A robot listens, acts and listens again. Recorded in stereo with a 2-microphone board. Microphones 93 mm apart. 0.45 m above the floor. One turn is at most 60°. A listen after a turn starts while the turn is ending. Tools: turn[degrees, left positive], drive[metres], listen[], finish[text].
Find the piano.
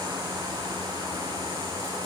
Action: listen[]
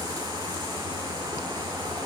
Action: listen[]
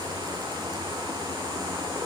Action: finish[I can't make out a piano to turn to.]